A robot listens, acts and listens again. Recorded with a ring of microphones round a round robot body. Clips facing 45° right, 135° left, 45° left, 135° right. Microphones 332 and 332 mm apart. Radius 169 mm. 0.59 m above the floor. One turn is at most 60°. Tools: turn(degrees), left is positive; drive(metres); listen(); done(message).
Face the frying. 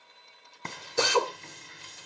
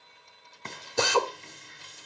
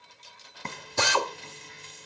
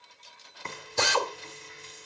done("Facing the frying.")